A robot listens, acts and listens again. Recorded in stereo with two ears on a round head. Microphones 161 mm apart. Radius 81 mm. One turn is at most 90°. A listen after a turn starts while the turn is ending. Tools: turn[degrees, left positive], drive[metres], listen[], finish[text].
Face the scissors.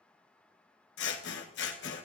Thought: The scissors: about 70° left or 110° left.
Action: turn[70]
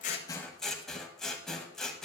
Action: finish[Found it: scissors, straight ahead, 1 to 2 m away.]